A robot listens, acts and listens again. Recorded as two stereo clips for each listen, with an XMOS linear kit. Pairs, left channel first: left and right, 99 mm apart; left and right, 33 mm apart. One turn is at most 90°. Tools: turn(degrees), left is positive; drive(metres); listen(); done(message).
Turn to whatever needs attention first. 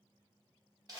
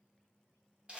listen()
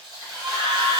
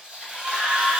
turn(degrees=-60)
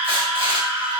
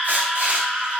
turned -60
turn(degrees=-20)
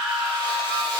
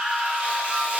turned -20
done("Found it: a scream, straight ahead, 1 to 2 m away.")